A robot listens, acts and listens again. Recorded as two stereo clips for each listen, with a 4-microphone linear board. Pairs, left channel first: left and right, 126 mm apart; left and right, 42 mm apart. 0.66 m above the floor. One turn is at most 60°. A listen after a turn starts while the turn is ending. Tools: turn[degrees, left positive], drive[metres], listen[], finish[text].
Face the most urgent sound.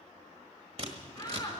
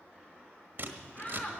Thought: The shout: about 35° left or 145° left.
Action: turn[35]
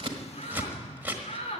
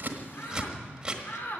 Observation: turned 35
Thought: So it is at 110° left.
Action: turn[60]
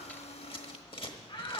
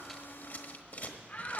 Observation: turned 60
Thought: The shout is now 50° left.
Action: turn[50]
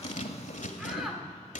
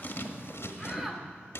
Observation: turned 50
Action: finish[Found it: a shout, straight ahead, 2 to 4 m away.]